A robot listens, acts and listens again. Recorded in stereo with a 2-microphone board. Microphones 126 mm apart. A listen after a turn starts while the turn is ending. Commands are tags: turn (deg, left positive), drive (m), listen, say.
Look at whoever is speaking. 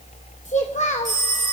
<turn deg="65"/>
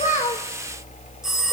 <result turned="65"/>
<listen/>
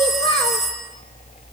<turn deg="45"/>
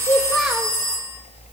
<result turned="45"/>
<listen/>
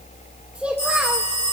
<turn deg="-10"/>
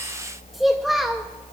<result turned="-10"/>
<say>Found it: a child speaking, straight ahead.</say>